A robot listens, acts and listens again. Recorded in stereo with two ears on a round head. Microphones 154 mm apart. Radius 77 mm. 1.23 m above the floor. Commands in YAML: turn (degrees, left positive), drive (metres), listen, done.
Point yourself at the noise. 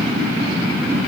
listen: true
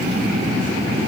listen: true
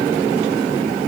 done: "I can't make out anything."